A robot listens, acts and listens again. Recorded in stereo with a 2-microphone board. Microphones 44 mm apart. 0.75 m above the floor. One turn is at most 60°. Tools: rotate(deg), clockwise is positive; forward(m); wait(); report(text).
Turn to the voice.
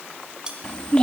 rotate(-20)
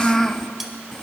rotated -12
rotate(-10)
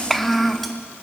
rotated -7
report("Facing the child speaking.")